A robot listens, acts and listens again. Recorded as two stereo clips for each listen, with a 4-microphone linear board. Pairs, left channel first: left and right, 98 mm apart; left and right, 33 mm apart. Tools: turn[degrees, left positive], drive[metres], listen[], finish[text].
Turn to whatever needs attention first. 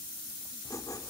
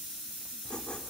Action: listen[]
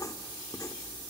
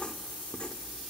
Action: listen[]
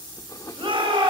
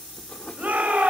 Thought: The shout: about 65° right or 115° right.
Action: turn[-65]
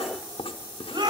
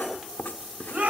Thought: So it is at 50° right.
Action: turn[-50]
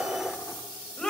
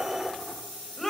Thought: The shout is now 10° left.
Action: turn[10]
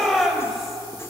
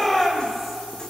Action: finish[Facing the shout.]